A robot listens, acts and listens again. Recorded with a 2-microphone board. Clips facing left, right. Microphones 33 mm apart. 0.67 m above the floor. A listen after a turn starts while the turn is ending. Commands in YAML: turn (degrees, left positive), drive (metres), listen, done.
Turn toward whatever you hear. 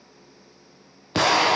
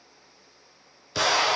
turn: 50
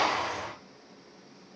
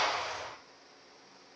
turn: 80
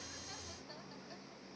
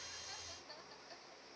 done: "Facing where the explosion came from. I can't hear it now."